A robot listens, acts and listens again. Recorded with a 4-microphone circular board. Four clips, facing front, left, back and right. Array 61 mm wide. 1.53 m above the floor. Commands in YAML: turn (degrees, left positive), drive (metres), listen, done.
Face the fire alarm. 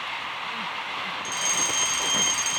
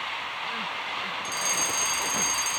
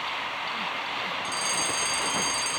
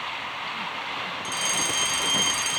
turn: -60
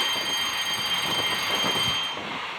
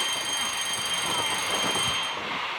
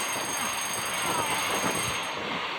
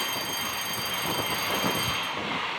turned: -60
turn: 10
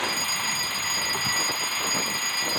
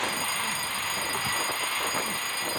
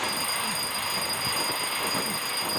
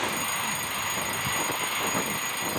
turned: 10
done: "Facing the fire alarm."